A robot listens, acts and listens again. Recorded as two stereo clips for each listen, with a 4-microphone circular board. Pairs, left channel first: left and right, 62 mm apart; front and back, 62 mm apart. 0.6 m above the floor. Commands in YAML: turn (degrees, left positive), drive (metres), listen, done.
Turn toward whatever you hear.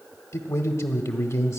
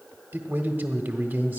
turn: 120
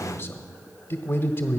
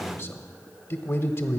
turn: 45
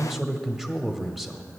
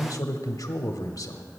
done: "Facing the man speaking."